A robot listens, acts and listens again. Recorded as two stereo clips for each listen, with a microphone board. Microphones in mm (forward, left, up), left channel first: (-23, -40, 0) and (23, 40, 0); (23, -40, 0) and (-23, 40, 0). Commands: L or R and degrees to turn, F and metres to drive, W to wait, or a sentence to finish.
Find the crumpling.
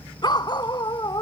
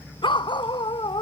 W
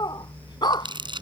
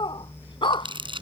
L95
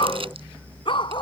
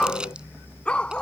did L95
W
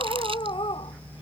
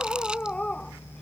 W
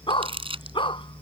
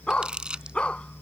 L40
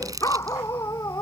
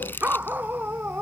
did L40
L10
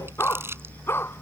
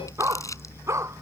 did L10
Found it: crumpling, straight ahead.